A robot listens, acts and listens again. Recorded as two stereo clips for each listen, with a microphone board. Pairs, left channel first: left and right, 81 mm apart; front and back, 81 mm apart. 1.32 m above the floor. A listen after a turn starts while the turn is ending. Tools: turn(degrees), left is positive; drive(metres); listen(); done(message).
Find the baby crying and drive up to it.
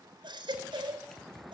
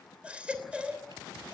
turn(degrees=-105)
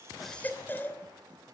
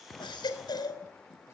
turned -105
turn(degrees=25)
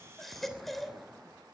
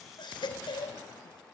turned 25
drive(metres=1.0)
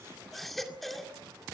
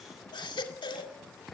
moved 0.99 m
drive(metres=1.0)
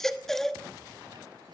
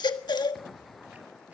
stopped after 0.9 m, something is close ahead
done("Arrived at the baby crying, straight ahead.")